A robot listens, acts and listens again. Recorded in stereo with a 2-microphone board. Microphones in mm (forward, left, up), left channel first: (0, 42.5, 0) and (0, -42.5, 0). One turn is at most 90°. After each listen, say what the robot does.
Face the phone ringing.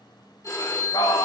Turn 40° left.
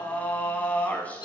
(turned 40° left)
Turn 90° left.
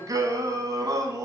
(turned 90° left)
Keep listening.
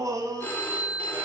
Turn 25° left.
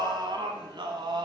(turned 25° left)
Keep listening.
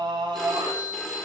Found it: a phone ringing, straight ahead.